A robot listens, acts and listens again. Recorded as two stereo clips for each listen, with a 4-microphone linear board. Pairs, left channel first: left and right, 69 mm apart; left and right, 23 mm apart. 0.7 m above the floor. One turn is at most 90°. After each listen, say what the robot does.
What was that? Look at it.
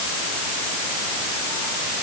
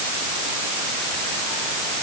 Keep listening.
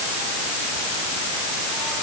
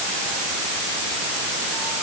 Keep listening.
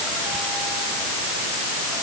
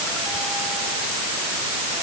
I can't make out anything to turn to.